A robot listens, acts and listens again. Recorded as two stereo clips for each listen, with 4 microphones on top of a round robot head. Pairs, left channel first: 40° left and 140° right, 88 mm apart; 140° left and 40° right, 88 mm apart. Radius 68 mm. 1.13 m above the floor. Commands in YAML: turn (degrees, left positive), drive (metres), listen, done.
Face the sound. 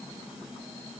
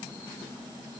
listen: true
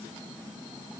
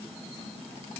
listen: true
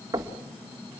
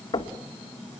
turn: 170
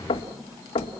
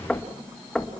turn: 55
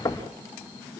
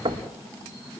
turn: -10
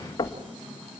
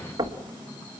done: "Found it: knocking, straight ahead."